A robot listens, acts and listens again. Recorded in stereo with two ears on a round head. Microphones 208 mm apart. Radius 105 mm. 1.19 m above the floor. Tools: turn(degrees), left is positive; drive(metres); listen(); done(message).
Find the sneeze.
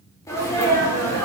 turn(degrees=30)
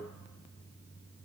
listen()
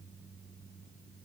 done("I heard a sneeze, but can't make it out now. It was about 15° right or 135° left.")